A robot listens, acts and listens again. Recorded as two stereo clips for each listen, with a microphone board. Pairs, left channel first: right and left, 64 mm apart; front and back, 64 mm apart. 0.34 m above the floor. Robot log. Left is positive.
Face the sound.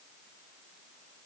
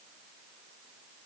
cmd idle
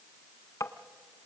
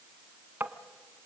note: The tapping: 120° right.
cmd yaw -120
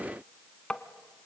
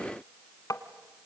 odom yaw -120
note: The tapping is now 15° right.
cmd yaw -15
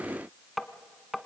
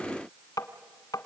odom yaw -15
end: Facing the tapping, 1 to 2 m away.